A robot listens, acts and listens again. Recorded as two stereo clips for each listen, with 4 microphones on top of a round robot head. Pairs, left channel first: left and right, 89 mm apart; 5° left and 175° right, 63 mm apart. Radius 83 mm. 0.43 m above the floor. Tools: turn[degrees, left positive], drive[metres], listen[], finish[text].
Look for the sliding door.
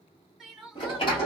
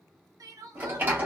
Thought: The sliding door: 125° left.
Action: turn[125]
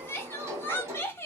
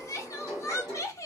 Thought: The sliding door is now 30° right.
Action: turn[-30]
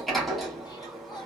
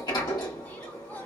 Action: finish[Facing the sliding door, 1 to 2 m away.]